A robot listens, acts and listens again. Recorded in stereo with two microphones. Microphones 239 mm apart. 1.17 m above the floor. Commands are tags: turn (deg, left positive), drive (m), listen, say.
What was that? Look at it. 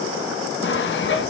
<turn deg="50"/>
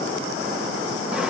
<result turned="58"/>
<listen/>
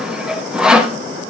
<say>Facing the sawing.</say>